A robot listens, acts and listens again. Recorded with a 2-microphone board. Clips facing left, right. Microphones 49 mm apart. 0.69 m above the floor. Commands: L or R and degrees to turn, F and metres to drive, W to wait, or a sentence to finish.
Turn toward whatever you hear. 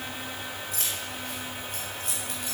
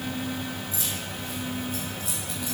L55
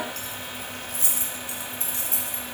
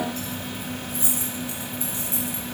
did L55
L75
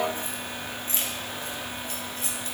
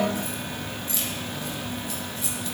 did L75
L45
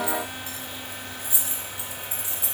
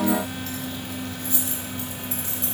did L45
L15
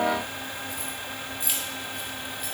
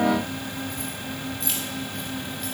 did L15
Facing the keys jangling.